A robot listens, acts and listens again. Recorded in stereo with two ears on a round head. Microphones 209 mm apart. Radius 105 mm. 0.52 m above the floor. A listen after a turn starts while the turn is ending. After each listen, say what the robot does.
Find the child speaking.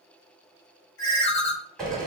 Keep listening.
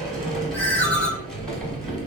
Turn 20° left.
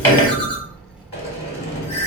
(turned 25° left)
Found it: a child speaking, straight ahead.